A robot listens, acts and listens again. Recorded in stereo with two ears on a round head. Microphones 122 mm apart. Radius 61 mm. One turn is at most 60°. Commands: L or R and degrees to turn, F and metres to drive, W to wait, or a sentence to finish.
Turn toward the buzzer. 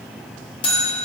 L40
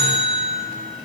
L60
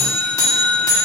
L25
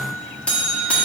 L10
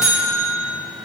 Found it: a buzzer, straight ahead.